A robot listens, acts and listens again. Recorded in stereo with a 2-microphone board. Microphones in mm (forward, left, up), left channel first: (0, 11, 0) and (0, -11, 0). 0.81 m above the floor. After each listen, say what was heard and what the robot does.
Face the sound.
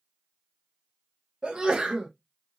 The sneeze: about 45° right or 135° right. Turn 45° right.
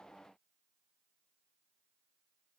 Keep listening.
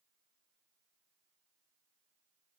I heard a sneeze, but can't make it out now. It was about straight ahead or 90° right.